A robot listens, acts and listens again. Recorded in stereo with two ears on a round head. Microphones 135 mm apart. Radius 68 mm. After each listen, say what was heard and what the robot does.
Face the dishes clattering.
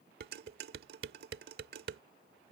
The dishes clattering: about 75° right or 105° right. Turn 75° right.
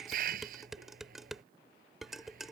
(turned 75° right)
Found it: dishes clattering, straight ahead.